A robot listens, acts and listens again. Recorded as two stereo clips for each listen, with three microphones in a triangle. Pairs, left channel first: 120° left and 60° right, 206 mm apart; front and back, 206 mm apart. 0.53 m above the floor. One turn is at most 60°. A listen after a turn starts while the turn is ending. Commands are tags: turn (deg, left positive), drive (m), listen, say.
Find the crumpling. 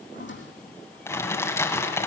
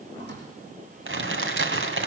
<turn deg="-60"/>
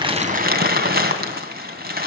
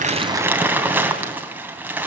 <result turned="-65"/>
<turn deg="-60"/>
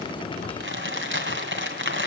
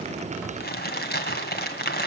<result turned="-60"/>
<turn deg="-40"/>
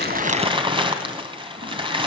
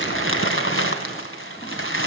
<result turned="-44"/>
<say>Found it: crumpling, straight ahead, 2 to 4 m away.</say>